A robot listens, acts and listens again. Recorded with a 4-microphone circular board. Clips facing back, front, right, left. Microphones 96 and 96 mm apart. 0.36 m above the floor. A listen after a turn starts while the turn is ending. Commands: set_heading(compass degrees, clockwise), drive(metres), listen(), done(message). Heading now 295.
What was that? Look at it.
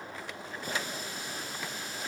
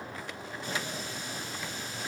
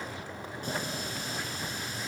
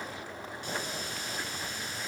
set_heading(70)
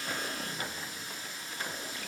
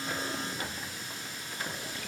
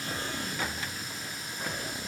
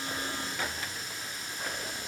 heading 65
done("Found it: a running tap, straight ahead, 2 to 4 m away.")